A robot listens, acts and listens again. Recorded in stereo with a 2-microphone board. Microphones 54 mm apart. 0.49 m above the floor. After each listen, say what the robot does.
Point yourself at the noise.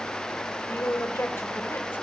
Turn 45° left.
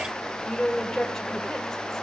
Turn 10° left.
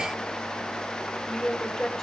Found it: a woman speaking, straight ahead, 1 to 2 m away.